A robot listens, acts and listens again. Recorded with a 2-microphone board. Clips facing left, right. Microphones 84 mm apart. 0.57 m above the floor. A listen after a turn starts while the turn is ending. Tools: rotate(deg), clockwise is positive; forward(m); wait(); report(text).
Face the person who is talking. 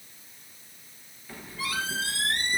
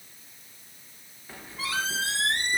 wait()
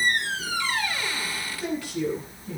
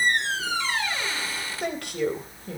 rotate(65)
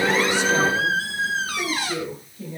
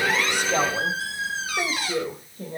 rotate(50)
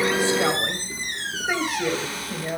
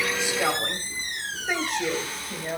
report("Facing the woman speaking.")